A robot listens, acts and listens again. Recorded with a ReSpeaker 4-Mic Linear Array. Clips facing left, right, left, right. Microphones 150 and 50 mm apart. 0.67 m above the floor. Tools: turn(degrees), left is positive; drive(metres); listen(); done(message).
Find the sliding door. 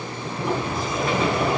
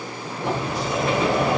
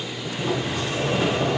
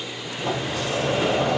turn(degrees=-90)
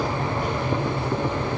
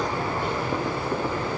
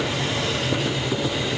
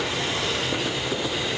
turn(degrees=15)
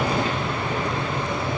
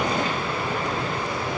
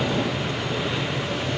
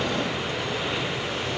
done("Facing the sliding door, 2 to 4 m away.")